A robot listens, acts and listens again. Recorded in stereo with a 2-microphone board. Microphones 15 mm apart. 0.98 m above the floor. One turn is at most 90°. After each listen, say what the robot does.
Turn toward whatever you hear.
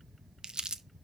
Turn 65° right.
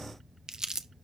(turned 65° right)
Turn 45° right.
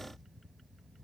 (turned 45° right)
Keep listening.
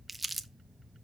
Found it: crumpling, straight ahead, under 1 m away.